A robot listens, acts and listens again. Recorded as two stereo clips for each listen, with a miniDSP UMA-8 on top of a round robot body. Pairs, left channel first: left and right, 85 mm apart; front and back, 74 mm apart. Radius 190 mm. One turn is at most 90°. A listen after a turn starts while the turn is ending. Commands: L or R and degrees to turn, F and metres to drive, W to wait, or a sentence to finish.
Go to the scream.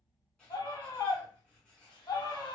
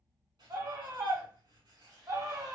L90
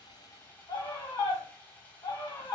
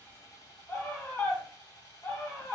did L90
L70
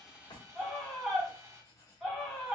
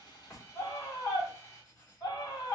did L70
F1.0
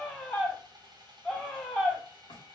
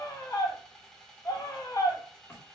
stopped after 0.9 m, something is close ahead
L10
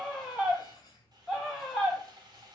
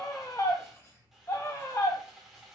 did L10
I am next to the scream.